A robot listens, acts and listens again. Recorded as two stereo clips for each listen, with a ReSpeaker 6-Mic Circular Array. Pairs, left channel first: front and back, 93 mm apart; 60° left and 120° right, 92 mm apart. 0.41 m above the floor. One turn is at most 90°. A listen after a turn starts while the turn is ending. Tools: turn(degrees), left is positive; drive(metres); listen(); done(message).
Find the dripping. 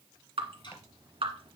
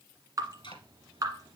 turn(degrees=-90)
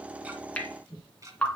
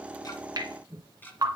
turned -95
turn(degrees=-75)
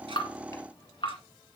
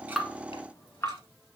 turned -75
done("Facing the dripping.")